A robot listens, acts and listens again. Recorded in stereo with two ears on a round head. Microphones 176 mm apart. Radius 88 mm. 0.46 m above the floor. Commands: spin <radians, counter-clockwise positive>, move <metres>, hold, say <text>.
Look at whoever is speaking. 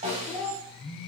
spin 0.52
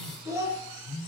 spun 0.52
spin -0.35
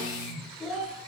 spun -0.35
say Facing the child speaking, under 1 m away.